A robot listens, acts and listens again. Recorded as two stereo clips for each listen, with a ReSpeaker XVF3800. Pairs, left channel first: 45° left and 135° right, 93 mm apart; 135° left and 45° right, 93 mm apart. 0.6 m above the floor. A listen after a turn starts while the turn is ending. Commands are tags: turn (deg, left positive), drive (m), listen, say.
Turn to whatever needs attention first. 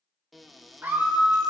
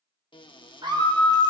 <turn deg="-70"/>
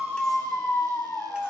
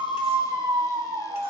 <turn deg="-20"/>
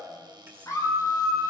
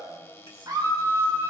<turn deg="-10"/>
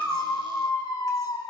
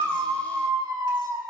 <say>Found it: a scream, straight ahead.</say>